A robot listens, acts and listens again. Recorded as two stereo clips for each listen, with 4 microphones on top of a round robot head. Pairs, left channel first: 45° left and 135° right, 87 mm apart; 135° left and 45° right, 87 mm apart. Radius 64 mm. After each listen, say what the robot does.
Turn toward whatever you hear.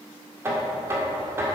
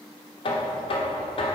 Turn 165° left.
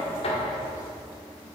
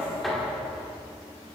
Turn 45° left.
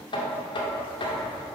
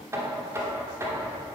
Turn 15° left.
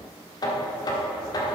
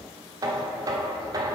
Facing the knocking.